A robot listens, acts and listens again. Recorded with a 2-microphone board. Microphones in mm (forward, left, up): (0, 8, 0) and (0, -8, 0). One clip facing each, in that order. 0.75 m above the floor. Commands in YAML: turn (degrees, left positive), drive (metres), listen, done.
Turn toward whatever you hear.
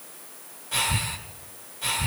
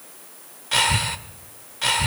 turn: -50
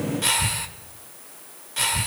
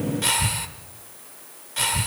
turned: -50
done: "Facing the breathing, 1 to 2 m away."